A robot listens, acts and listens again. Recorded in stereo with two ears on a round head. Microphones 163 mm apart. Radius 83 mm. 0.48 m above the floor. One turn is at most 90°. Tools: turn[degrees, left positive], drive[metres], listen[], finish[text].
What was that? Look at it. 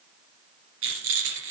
Action: turn[-90]
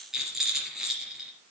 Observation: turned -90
Action: finish[Facing the rattle, 2 to 4 m away.]